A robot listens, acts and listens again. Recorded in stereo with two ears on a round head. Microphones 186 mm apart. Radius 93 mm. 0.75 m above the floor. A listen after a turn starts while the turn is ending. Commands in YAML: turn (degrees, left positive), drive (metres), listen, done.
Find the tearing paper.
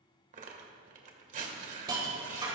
turn: -35
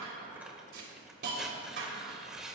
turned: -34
done: "Facing the tearing paper, 1 to 2 m away."